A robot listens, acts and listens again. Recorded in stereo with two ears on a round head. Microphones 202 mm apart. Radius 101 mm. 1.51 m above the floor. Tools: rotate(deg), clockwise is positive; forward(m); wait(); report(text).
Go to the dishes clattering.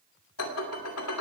rotate(-75)
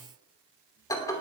rotate(-15)
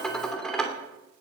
forward(1.0)
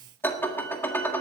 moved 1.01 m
rotate(-10)
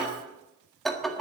forward(1.0)
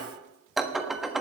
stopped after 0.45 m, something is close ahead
report("Arrived at the dishes clattering, straight ahead.")